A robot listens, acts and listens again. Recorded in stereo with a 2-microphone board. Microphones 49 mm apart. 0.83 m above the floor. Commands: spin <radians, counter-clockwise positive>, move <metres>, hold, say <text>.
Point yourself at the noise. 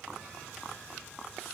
hold
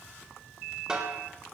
spin -0.26
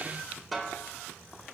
say Facing the snare drum, 2 to 4 m away.